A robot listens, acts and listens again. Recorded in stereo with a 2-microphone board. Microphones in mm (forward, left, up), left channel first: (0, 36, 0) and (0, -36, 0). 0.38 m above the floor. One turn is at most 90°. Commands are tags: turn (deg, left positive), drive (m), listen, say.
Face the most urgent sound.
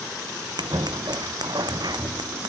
<listen/>
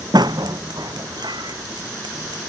<listen/>
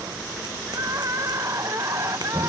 <turn deg="-45"/>
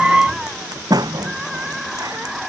<say>Found it: crying, straight ahead.</say>